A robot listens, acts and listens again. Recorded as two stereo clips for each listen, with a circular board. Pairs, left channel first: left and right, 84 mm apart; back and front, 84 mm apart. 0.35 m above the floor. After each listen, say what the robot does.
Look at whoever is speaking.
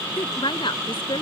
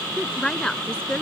Turn 100° left.
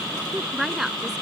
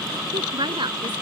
Facing the woman speaking.